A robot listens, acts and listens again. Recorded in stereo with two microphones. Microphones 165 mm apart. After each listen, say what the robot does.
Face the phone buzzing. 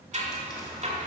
Keep listening.
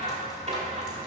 Keep listening.
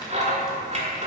I can't make out a phone buzzing, only scissors.